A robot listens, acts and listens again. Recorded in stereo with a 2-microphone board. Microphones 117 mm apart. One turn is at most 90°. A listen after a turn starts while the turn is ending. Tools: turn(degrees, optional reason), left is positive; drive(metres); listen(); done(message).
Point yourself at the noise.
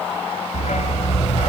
turn(degrees=90)
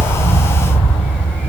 done("Facing the dog barking, 2 to 4 m away.")